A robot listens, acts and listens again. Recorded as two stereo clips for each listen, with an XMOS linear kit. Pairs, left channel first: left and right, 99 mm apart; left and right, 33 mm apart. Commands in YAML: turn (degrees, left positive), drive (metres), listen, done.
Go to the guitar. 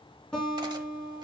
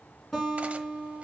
turn: 30
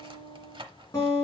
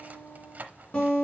turn: 145
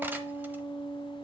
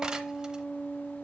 turn: 75
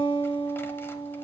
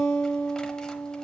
turn: 20
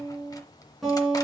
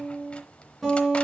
drive: 1.0
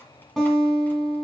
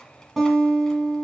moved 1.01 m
drive: 1.0
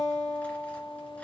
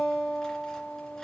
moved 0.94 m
drive: 1.0
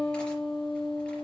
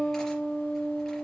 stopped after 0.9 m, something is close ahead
turn: 10
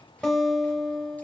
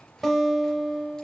done: "Arrived at the guitar, straight ahead."